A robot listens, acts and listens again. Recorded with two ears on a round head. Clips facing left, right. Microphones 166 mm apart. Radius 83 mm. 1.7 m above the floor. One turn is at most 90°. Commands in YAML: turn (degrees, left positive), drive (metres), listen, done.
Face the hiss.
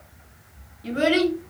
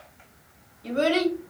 listen: true
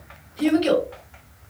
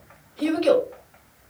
listen: true
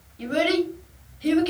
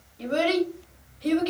done: "I can't make out a hiss to turn to."